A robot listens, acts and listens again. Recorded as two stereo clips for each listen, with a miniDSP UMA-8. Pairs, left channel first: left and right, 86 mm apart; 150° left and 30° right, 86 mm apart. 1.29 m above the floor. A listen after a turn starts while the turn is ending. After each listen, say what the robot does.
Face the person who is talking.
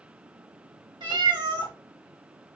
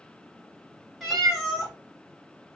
Keep listening.
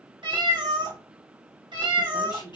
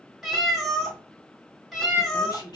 Turn 115° left.
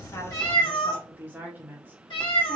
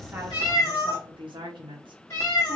Turn 25° right.
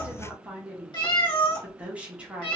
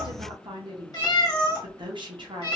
Turn 15° right.
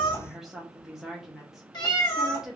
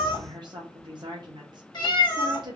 Facing the woman speaking, 1 to 2 m away.